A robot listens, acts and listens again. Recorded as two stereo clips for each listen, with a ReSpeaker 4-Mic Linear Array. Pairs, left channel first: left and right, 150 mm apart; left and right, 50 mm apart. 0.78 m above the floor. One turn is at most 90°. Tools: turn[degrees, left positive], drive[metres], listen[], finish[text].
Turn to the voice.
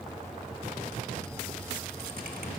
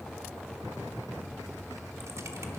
Action: listen[]
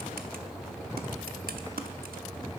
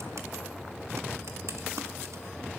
Action: listen[]
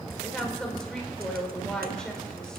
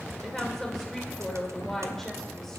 Action: turn[30]
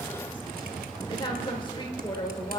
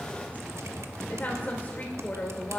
Thought: So it is at 145° left.
Action: turn[90]
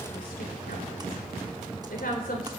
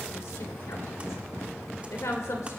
Thought: The woman speaking is now 95° left.
Action: turn[90]
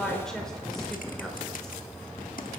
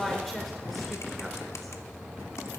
Action: finish[Found it: a woman speaking, straight ahead.]